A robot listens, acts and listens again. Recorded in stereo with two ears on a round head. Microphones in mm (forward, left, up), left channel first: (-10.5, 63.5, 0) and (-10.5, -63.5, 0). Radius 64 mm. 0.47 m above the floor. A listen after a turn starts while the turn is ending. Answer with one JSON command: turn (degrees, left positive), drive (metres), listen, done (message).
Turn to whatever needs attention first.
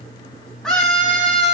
{"turn": 30}
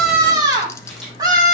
{"turn": -30}
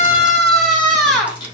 {"done": "Found it: a scream, straight ahead."}